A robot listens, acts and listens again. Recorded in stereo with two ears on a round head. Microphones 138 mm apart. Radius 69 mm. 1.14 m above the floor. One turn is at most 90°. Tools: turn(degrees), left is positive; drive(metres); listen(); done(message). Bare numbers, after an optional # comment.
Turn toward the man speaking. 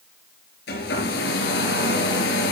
listen()
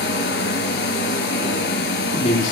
# The man speaking: about 50° left or 130° left.
turn(50)
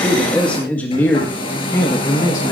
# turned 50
# So it is at 20° left.
turn(20)
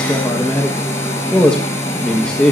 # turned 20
done("Facing the man speaking, 1 to 2 m away.")